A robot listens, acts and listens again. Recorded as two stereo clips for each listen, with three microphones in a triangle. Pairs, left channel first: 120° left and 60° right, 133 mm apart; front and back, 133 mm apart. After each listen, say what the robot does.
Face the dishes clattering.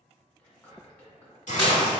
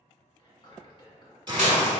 Turn 15° right.
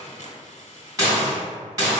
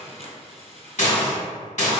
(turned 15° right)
Facing the dishes clattering.